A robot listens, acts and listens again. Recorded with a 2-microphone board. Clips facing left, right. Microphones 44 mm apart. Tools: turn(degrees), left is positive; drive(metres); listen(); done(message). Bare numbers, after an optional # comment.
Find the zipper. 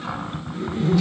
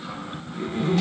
# The zipper: about 40° right or 140° right.
turn(-40)
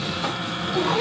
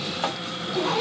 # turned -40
done("Facing the zipper.")